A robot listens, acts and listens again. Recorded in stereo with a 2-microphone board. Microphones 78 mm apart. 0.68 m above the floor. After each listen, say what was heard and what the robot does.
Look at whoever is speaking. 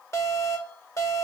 Keep listening.
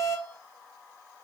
Keep listening.
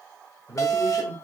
The man speaking: about 45° left or 135° left. Turn 45° left.
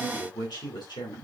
So it is at 85° left. Turn 85° left.
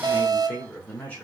The man speaking is now 25° left. Turn 25° left.
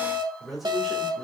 Facing the man speaking.